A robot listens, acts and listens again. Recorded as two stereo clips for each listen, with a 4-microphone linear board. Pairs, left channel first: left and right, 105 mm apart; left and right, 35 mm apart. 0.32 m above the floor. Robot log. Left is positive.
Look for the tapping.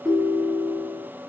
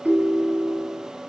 cmd idle
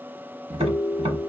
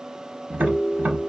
note: The tapping: about 70° right or 110° right.
cmd yaw -70
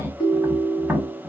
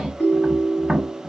note: So it is at 15° right.
cmd yaw -15
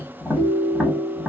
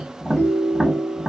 end: Found it: tapping, straight ahead, under 1 m away.